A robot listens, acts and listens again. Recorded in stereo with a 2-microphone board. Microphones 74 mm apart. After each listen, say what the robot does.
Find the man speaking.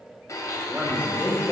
Turn 25° right.
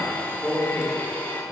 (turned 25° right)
Turn 10° right.
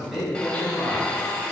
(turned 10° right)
Turn 10° right.
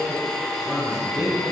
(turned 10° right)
Turn 10° right.
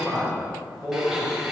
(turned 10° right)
Found it: a man speaking, straight ahead.